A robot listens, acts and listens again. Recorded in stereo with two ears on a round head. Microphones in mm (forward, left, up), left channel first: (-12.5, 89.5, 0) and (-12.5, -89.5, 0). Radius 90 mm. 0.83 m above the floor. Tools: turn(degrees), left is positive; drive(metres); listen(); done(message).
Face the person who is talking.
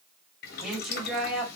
turn(degrees=-30)
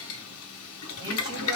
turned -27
turn(degrees=-150)
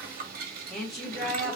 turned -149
done("Found it: a woman speaking, straight ahead.")